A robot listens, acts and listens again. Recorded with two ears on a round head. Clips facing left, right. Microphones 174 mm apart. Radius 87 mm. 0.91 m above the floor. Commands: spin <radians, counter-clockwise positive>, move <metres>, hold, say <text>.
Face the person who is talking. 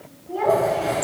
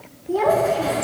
spin -0.96
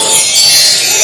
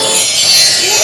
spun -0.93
hold
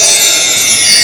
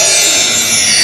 hold
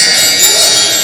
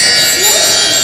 say I heard a child speaking, but can't make it out now. It was about straight ahead or 70° right.